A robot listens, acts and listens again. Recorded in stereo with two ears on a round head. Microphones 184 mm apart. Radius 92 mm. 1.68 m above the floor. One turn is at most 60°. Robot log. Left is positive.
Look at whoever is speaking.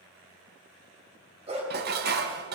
cmd idle
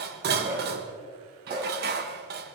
cmd idle
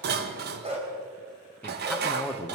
cmd yaw +30
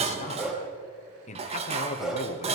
note: So it is at 145° left.
cmd yaw +60
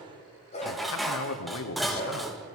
note: The man speaking is now 110° left.
cmd yaw +60
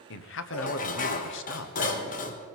note: The man speaking is now 60° left.
cmd yaw +60
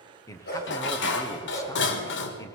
note: The man speaking is now 15° left.
cmd yaw +15
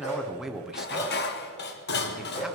end: Found it: a man speaking, straight ahead, 1 to 2 m away.